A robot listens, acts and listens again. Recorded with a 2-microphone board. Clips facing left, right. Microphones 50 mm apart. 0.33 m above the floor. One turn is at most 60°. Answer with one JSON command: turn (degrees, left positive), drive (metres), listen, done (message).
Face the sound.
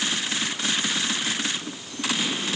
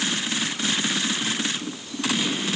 {"listen": true}
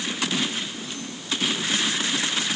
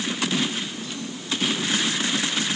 {"listen": true}
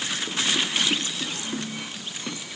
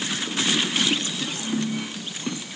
{"done": "I can't make out anything to turn to."}